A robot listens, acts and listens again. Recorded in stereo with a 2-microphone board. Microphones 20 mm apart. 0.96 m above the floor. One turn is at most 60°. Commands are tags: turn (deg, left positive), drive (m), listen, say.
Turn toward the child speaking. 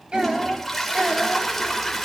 <turn deg="-60"/>
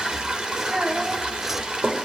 <turn deg="-45"/>
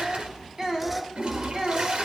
<turn deg="-25"/>
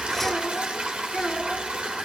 <say>Facing the child speaking, over 4 m away.</say>